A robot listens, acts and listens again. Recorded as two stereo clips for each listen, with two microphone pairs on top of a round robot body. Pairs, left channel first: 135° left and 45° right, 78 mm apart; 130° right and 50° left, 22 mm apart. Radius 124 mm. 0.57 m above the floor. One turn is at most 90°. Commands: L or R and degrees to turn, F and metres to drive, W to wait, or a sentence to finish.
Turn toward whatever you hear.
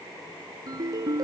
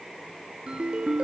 Facing the ringtone.